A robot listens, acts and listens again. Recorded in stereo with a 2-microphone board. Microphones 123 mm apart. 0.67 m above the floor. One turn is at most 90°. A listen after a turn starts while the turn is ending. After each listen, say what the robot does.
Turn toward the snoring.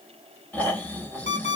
Turn 30° left.
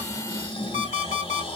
Turn 90° left.
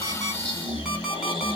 Turn 45° left.
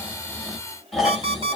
Facing the snoring, 1 to 2 m away.